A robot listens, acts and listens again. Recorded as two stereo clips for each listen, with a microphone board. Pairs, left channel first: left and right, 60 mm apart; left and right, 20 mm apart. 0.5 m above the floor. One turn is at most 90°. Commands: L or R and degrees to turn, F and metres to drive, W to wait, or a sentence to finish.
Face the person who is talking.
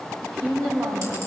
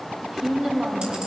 R70
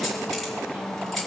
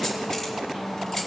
W
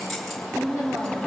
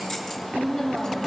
R30
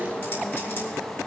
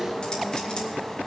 W
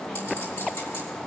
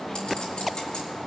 W
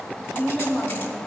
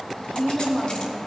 Facing the woman speaking, 2 to 4 m away.